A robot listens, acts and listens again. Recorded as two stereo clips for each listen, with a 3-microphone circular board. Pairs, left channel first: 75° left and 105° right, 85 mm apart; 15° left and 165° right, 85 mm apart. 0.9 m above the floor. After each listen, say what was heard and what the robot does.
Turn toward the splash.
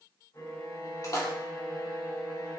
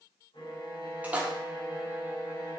The splash: 120° left. Turn 120° left.
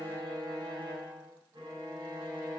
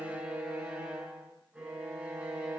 I heard a splash from this way, but can't make it out now.